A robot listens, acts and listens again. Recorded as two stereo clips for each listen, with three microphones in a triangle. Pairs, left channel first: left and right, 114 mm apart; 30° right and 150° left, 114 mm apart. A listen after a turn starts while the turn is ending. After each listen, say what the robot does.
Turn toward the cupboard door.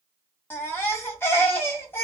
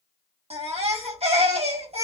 Keep listening.
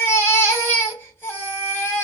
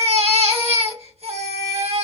Keep listening.
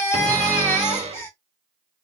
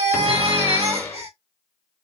Turn 100° right.
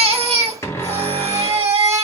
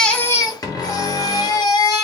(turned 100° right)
Turn 20° left.
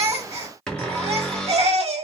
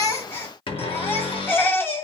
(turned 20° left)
Facing the cupboard door.